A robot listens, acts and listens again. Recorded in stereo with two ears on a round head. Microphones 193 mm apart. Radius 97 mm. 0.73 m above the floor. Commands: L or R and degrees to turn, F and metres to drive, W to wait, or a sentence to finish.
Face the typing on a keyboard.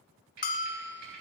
R50
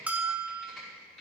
Facing the typing on a keyboard, over 4 m away.